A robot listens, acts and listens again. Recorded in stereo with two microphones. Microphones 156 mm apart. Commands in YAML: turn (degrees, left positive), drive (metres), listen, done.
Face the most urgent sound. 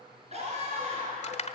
turn: -45
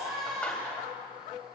done: "Found it: a scream, straight ahead."